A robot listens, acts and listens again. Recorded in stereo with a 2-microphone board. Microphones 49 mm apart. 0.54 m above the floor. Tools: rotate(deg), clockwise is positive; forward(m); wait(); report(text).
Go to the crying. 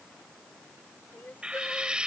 rotate(-45)
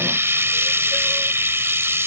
wait()
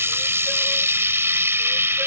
wait()
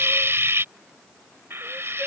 report("I heard crying, but can't make it out now. It was about straight ahead or 90° left. I did not reach it.")